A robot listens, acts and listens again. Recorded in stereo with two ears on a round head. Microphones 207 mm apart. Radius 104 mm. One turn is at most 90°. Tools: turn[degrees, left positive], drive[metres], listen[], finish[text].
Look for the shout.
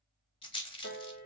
Action: listen[]
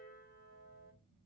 Action: listen[]
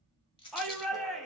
Action: turn[30]
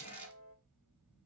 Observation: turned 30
Action: listen[]
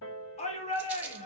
Thought: So it is at 150° left.
Action: turn[90]
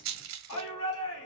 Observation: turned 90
Thought: The shout is now 65° left.
Action: turn[65]
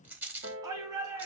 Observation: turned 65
Thought: The shout is now 15° right.
Action: turn[-15]
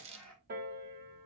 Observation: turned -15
Action: listen[]
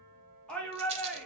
Action: finish[Found it: a shout, straight ahead.]